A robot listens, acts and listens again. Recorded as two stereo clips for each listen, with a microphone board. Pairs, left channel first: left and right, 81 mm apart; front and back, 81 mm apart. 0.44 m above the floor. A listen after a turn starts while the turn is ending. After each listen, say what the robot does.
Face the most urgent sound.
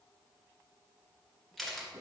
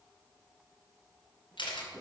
Keep listening.
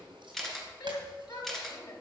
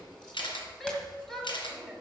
Turn 85° left.
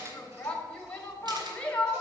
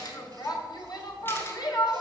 Turn 20° left.
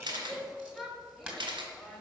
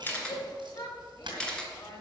Found it: a shout, straight ahead, 2 to 4 m away.